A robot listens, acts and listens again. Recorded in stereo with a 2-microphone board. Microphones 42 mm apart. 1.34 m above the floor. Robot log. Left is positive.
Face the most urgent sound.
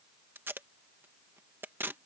cmd idle
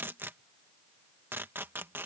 cmd idle
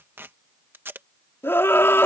note: The scream: about 75° left or 105° left.
cmd yaw +75
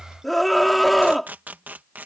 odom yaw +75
end: Facing the scream.